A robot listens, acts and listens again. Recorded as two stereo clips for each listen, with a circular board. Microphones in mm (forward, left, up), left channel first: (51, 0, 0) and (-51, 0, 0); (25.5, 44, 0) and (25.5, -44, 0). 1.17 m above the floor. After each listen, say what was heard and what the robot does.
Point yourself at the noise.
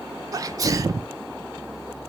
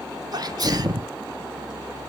The sneeze: 125° right. Turn 125° right.
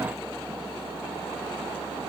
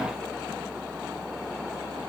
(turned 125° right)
Facing where the sneeze came from. I can't hear it now.